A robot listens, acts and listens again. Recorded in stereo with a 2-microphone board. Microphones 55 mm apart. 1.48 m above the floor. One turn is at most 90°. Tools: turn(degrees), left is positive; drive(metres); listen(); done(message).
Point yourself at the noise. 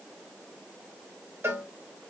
turn(degrees=-50)
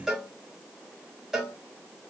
turn(degrees=-10)
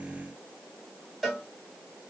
done("Facing the cowbell, 1 to 2 m away.")